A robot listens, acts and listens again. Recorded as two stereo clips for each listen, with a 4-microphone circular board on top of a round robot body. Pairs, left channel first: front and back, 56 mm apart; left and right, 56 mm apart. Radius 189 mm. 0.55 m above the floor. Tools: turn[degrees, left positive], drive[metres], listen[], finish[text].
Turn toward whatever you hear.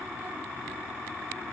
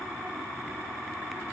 Action: listen[]
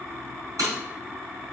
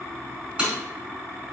Thought: The breaking glass: 160° right.
Action: turn[-160]
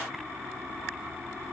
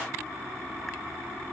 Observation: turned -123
Thought: Nothing new. It was at 40° right.
Action: turn[-40]
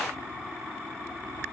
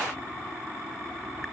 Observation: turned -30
Thought: Nothing new. It was at 10° right.
Action: turn[-10]
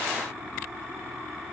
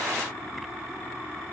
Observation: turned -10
Action: finish[I heard breaking glass from this way, but can't make it out now.]